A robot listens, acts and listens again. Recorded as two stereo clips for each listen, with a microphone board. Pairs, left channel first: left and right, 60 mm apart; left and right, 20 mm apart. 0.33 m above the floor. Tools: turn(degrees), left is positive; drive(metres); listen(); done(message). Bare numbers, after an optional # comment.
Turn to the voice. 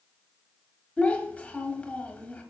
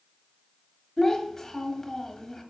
# The child speaking: about 20° left or 160° left.
turn(20)
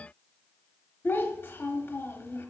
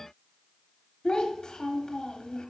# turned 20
# So it is at 135° left.
turn(135)
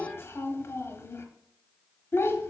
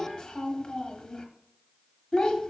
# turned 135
# The child speaking is now 55° left.
turn(55)
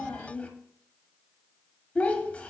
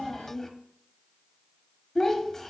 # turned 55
# The child speaking is now 30° left.
turn(30)
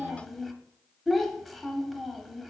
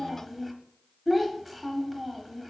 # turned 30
done("Found it: a child speaking, straight ahead, 1 to 2 m away.")